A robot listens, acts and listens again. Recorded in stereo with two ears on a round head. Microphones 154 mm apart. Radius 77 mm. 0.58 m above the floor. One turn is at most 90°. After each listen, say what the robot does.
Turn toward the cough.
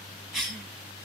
Turn 30° left.
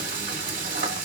Keep listening.
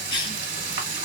Turn 90° left.
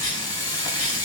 Turn 60° left.
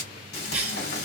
Turn 10° right.
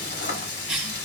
Found it: a cough, straight ahead, 1 to 2 m away.